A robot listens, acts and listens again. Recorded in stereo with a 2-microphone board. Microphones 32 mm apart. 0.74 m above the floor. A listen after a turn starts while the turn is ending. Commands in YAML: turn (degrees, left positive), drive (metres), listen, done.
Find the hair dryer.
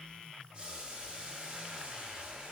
listen: true
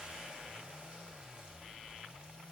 listen: true
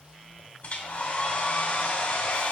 turn: 35
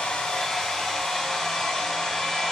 done: "Found it: a hair dryer, straight ahead, 1 to 2 m away."